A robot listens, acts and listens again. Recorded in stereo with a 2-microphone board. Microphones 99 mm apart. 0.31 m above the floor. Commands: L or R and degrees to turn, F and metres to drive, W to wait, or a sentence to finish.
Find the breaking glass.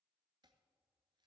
W
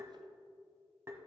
W
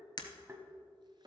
L45
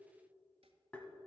W
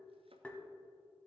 I heard breaking glass, but can't make it out now. It was about straight ahead or 90° left.